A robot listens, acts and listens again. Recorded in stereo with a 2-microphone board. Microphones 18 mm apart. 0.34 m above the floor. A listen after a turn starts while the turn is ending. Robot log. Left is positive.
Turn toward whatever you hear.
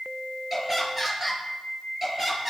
note: The laughter: about 15° right or 165° right.
cmd yaw -15
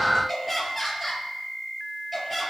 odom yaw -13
cmd yaw -30
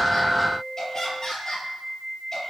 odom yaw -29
note: So it is at 25° left.
cmd yaw +25
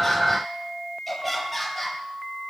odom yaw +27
end: Facing the laughter, over 4 m away.